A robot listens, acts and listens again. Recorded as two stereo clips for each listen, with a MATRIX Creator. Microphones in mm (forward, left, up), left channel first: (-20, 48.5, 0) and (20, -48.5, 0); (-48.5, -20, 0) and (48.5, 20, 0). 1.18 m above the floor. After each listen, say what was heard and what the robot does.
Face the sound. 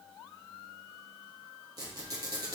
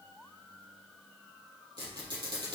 The squeak: 20° right. Turn 20° right.
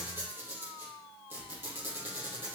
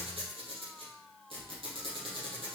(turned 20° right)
Facing the squeak.